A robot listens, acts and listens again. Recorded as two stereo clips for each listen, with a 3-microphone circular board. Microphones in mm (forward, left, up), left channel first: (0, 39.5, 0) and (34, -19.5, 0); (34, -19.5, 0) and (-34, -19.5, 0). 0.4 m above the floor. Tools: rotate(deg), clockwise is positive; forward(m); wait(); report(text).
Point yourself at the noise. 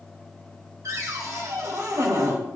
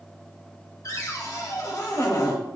rotate(25)
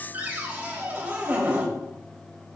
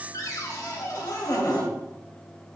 report("Facing the cupboard door.")